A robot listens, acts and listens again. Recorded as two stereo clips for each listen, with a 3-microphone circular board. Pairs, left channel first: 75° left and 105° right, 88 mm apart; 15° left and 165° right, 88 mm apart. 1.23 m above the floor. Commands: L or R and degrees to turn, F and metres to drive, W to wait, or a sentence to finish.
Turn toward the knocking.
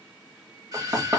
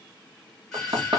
R150
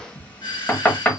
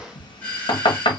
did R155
Facing the knocking.